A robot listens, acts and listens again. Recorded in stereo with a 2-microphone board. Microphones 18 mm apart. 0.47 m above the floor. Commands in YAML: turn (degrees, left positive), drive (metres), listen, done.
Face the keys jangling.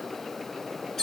listen: true
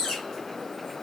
listen: true
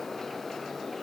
done: "I can't make out keys jangling to turn to."